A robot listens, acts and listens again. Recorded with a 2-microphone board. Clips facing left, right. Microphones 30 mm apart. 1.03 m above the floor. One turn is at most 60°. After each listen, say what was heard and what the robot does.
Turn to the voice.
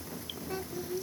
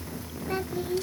The child speaking: about 30° right or 150° right. Turn 30° right.
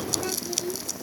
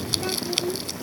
Found it: a child speaking, straight ahead.